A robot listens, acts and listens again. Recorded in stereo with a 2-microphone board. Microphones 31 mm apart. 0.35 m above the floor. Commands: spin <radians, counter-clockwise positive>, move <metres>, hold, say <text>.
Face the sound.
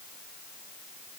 hold
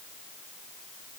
hold
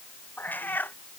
spin 1.57
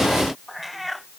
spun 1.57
say Found it: a cat meowing, straight ahead.